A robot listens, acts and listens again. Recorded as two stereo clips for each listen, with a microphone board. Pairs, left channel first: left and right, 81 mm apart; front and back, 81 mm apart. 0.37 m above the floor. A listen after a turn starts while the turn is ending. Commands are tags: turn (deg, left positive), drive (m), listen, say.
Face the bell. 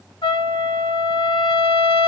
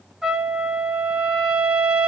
<listen/>
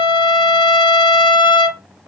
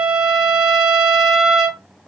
<listen/>
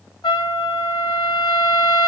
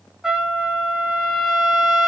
<say>I can't make out a bell, only a trumpet.</say>